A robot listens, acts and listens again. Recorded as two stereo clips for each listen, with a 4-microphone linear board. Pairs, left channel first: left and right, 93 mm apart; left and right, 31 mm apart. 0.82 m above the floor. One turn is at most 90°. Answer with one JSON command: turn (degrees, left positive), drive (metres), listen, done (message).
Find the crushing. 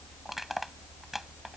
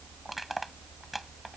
{"turn": 30}
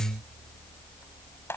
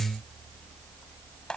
{"turn": 90}
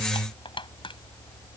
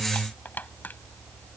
{"turn": 65}
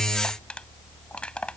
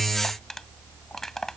{"turn": 10}
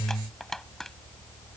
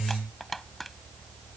{"done": "Facing the crushing."}